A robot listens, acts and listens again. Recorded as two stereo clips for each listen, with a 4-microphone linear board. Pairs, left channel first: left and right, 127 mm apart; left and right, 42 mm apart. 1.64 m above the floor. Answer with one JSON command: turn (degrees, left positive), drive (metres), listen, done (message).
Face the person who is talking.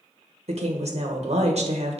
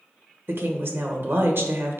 {"turn": -55}
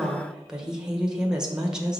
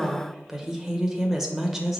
{"done": "Found it: a woman speaking, straight ahead, 1 to 2 m away."}